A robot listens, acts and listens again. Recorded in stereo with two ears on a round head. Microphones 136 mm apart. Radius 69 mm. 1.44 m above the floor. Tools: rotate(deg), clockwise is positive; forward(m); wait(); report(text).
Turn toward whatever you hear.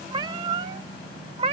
rotate(40)
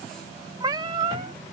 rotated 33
rotate(35)
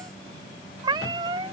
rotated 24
rotate(35)
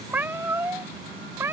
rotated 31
rotate(20)
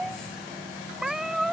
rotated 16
report("Found it: a cat meowing, straight ahead.")